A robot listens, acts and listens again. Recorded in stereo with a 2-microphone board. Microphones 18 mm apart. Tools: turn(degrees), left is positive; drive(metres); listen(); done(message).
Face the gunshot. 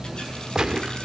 turn(degrees=-35)
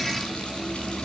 listen()
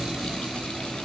done("I heard a gunshot, but can't make it out now. It was about straight ahead or 110° right.")